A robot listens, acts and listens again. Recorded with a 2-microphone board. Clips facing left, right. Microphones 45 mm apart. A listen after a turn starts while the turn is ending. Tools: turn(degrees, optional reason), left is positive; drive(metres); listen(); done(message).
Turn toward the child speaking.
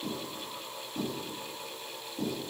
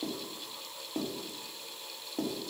listen()
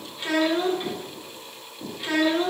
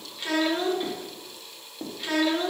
turn(degrees=30)
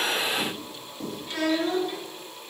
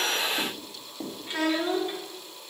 turn(degrees=-25, reason="So it is at 25° right.")
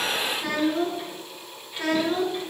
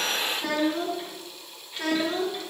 done("Facing the child speaking, 1 to 2 m away.")